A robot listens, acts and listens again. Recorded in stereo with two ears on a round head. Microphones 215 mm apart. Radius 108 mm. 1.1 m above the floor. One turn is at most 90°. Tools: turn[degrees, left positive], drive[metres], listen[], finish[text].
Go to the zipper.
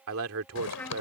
Thought: The zipper: about 75° left or 105° left.
Action: turn[75]
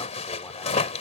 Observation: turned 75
Thought: So it is at 30° left.
Action: turn[30]
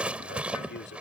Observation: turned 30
Action: drive[1.0]
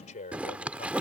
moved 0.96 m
Action: drive[1.0]
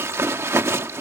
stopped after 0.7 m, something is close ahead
Thought: The zipper is now 10° right.
Action: turn[-10]
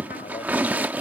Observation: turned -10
Thought: The zipper is now 10° right.
Action: turn[-10]
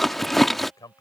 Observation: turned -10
Action: finish[Arrived at the zipper, straight ahead.]